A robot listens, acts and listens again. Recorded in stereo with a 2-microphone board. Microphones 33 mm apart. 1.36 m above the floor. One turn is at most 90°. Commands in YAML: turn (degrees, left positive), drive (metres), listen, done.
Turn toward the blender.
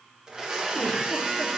turn: -20
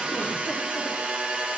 turn: -90
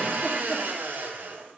turn: -80
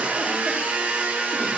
turn: -40
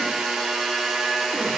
done: "Found it: a blender, straight ahead, under 1 m away."